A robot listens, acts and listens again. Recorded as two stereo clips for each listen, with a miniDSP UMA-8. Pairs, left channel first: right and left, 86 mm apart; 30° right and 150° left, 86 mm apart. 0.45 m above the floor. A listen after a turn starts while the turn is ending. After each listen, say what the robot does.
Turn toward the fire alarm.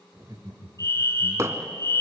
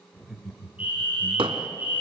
Turn 140° right.
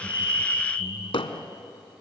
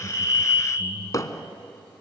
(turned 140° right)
Turn 10° right.
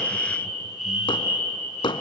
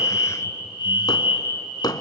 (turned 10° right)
Facing the fire alarm.